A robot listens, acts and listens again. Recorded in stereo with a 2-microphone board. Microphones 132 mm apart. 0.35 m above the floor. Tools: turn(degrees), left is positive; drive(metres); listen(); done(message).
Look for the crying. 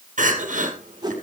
turn(degrees=-90)
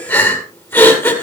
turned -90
turn(degrees=15)
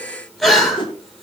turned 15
done("Found it: crying, straight ahead.")